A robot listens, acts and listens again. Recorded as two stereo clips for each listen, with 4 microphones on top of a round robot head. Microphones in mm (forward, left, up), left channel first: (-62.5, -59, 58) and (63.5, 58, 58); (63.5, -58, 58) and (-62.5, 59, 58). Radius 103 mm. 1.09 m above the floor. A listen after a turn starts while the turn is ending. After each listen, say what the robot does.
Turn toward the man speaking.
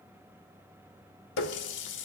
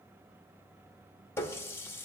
Keep listening.
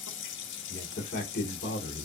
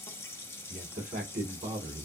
Turn 175° right.
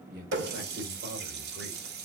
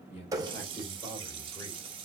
Turn 25° left.
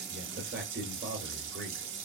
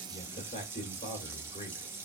Turn 10° left.
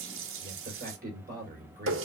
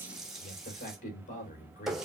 Facing the man speaking.